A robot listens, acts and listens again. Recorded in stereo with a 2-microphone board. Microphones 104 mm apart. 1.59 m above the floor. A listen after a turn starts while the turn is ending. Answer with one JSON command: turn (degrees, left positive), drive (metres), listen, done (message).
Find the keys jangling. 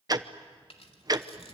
{"turn": 65}
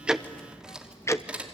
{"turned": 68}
{"turn": -15}
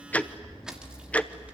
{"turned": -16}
{"turn": -15}
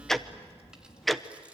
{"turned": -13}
{"listen": true}
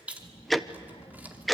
{"turn": -20}
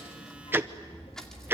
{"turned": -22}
{"done": "Facing the keys jangling, 2 to 4 m away."}